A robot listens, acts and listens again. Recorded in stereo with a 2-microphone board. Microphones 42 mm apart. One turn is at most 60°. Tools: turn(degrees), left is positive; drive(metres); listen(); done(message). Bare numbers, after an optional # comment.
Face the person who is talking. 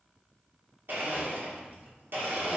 listen()
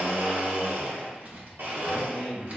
# The man speaking: about 20° right or 160° right.
turn(-20)
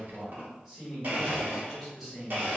# So it is at 10° right.
turn(-10)
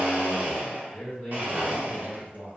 done("Facing the man speaking, 1 to 2 m away.")